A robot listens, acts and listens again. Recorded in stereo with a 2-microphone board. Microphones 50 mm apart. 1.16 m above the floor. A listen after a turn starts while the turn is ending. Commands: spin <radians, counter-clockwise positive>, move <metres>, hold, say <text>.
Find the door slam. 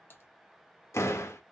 spin 1.31
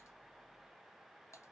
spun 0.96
hold
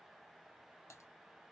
say I heard a door slam, but can't make it out now. It was about 20° left or 50° left.